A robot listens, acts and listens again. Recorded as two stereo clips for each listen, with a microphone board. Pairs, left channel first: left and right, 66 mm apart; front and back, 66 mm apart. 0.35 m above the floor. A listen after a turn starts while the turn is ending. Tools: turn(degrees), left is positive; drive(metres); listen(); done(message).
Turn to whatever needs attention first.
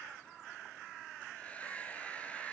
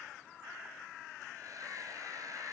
listen()
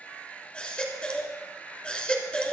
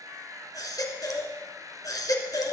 turn(degrees=20)
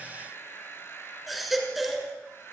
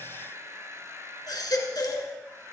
done("Found it: a baby crying, straight ahead.")